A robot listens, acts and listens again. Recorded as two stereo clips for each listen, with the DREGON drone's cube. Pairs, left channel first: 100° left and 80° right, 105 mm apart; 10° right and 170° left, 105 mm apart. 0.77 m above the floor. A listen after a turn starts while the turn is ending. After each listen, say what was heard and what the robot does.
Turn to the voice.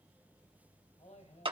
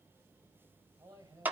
The man speaking: 105° left. Turn 105° left.
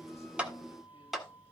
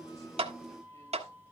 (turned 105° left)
Keep listening.
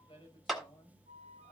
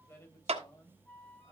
The man speaking is now 55° left. Turn 55° left.
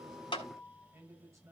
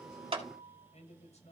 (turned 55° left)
The man speaking is now 15° right. Turn 15° right.
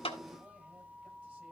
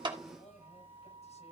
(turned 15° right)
Keep listening.
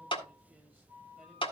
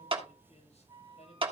Keep listening.
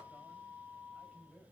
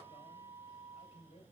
Found it: a man speaking, straight ahead.